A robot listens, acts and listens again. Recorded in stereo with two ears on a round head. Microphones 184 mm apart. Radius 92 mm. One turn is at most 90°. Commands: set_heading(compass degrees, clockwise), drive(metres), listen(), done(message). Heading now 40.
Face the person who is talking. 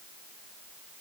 listen()
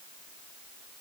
listen()
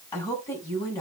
set_heading(25)
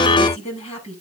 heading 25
set_heading(295)
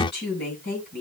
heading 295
set_heading(240)
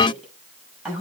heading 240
done("Found it: a woman speaking, straight ahead, over 4 m away.")